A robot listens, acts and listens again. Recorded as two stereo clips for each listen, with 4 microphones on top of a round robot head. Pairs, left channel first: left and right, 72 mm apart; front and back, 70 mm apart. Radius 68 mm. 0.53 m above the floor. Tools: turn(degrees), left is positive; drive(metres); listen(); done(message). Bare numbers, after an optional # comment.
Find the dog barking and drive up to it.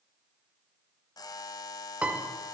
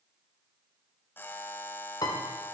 listen()
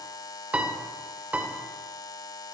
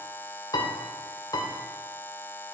listen()
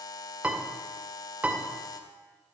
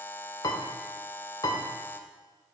done("I can't make out a dog barking to turn to.")